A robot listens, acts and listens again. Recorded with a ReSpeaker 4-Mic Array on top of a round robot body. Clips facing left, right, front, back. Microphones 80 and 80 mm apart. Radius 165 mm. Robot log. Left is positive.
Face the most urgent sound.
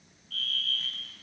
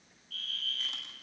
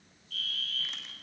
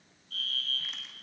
note: The fire alarm: 130° left.
cmd yaw +130
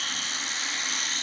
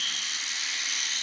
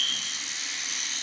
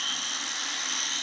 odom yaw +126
end: Facing the fire alarm.